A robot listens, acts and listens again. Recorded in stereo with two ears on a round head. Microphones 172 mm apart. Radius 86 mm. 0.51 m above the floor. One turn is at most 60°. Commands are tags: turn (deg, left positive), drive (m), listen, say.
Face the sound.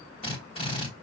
<turn deg="30"/>
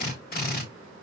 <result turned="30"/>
<turn deg="60"/>
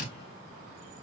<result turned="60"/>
<turn deg="55"/>
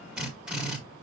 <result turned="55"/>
<say>Found it: a drill, straight ahead, 1 to 2 m away.</say>